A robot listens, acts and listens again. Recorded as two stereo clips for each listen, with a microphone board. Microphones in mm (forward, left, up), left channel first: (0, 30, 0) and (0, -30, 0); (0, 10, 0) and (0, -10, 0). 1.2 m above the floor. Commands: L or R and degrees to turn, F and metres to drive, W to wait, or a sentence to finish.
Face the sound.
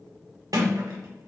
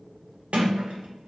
R90
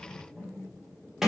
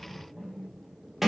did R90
R10
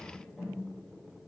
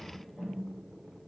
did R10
Found it: a sliding door, straight ahead.